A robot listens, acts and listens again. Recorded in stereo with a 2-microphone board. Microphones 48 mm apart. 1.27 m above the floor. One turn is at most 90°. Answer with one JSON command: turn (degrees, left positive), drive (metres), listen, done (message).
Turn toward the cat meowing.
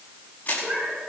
{"turn": -25}
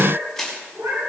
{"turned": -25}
{"turn": -90}
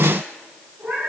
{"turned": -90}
{"turn": -50}
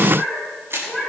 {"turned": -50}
{"turn": -10}
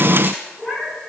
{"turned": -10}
{"done": "Facing the cat meowing."}